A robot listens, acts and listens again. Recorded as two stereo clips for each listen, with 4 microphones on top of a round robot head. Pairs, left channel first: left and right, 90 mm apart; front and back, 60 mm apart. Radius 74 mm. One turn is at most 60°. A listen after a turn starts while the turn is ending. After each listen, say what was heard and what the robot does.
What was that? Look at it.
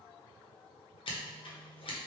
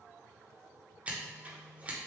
The scissors: 110° left. Turn 60° left.
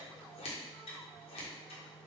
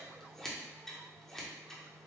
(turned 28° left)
The scissors is now 80° left. Turn 60° left.
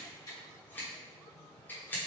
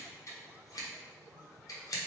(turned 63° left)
The scissors is now 20° left. Turn 20° left.
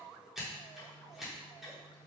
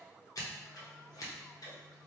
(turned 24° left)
Facing the scissors.